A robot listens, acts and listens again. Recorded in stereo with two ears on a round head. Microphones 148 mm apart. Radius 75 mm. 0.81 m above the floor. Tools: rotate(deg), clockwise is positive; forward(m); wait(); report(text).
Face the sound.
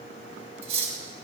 rotate(40)
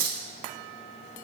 rotate(100)
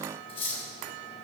rotate(-35)
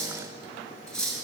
report("Facing the cutlery clinking.")